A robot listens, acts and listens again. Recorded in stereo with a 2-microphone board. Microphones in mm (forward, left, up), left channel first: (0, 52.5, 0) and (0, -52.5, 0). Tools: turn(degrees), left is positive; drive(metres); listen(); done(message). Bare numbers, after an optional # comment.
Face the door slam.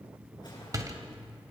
# The door slam: about 35° right or 145° right.
turn(-35)
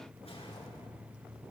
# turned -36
listen()
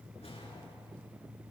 done("I heard a door slam, but can't make it out now. It was about straight ahead or 110° right.")